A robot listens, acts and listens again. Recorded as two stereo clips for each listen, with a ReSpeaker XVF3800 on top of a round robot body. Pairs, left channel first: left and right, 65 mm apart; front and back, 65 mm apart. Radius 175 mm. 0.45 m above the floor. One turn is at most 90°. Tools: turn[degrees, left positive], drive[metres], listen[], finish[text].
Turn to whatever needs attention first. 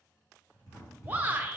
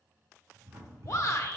Thought: The shout: 25° right.
Action: turn[-25]
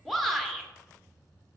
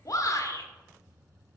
Action: finish[Found it: a shout, straight ahead, 1 to 2 m away.]